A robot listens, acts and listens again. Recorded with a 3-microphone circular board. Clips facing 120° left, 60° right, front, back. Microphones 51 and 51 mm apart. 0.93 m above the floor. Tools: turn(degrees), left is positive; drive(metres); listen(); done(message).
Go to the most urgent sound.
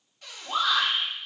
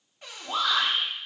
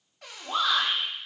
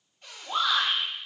turn(degrees=50)
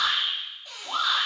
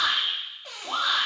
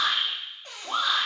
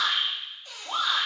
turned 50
drive(metres=1.0)
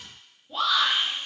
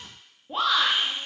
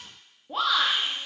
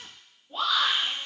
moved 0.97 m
drive(metres=1.0)
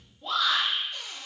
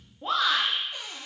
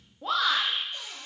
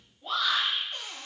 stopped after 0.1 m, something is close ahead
done("I am next to the shout.")